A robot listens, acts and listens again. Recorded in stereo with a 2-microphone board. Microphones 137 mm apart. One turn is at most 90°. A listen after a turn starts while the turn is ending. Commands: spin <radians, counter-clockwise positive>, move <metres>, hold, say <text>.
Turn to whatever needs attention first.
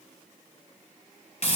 hold
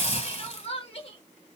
spin 0.79
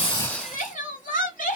spin 1.48
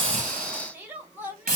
spin -0.26
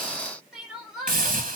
say Facing the crying.